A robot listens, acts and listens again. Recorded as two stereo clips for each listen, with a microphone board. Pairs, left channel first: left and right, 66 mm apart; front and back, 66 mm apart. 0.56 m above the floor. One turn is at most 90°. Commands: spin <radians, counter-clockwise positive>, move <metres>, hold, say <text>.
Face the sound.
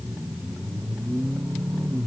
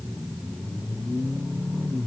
hold
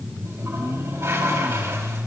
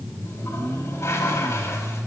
spin -0.79
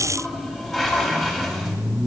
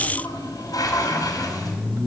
say Facing the toilet flushing.